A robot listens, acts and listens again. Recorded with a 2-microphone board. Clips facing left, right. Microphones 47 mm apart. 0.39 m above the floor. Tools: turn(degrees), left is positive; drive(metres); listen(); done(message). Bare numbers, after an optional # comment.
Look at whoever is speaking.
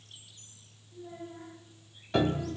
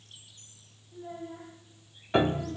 # The child speaking: about 40° right or 140° right.
turn(-40)
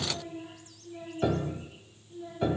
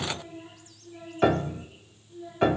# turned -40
# So it is at 10° left.
turn(10)
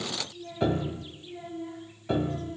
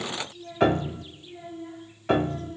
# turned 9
done("Facing the child speaking.")